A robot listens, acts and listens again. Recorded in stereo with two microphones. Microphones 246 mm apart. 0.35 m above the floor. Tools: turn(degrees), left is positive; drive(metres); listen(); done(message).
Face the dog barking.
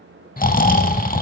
listen()
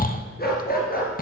turn(degrees=35)
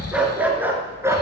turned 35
turn(degrees=-10)
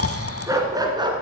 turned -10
turn(degrees=-20)
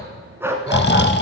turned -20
turn(degrees=-10)
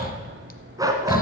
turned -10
turn(degrees=-15)
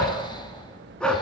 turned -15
done("Found it: a dog barking, straight ahead.")